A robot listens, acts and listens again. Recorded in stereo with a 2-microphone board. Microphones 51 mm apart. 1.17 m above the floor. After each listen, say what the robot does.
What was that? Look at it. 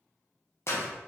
Turn 55° left.
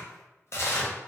Turn 65° left.
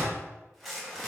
Facing the tearing paper, under 1 m away.